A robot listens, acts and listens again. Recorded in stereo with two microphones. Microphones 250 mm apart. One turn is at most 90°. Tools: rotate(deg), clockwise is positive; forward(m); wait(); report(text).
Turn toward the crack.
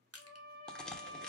rotate(-30)
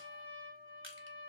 wait()
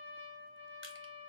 report("I heard a crack, but can't make it out now. It was about 25° right or 145° left.")